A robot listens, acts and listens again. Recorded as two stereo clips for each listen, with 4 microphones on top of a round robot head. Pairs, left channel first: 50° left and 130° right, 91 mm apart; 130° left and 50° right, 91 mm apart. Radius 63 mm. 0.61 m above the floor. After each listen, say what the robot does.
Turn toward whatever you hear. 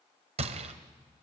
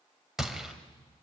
Turn 135° right.
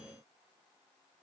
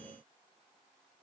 I heard a gunshot from this way, but can't make it out now.